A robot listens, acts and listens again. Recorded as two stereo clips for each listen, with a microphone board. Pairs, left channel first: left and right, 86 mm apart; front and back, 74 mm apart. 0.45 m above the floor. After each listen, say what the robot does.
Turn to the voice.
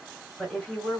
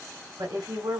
Turn 170° left.
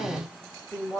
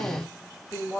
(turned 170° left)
Turn 20° left.
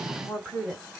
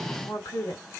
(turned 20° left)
Found it: a woman speaking, straight ahead.